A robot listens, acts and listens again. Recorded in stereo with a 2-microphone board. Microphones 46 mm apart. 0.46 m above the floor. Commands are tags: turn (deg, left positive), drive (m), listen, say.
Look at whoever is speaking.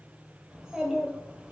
<turn deg="-15"/>
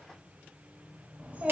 <turn deg="-150"/>
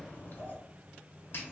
<turn deg="50"/>
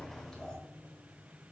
<turn deg="20"/>
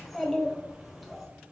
<say>Facing the child speaking.</say>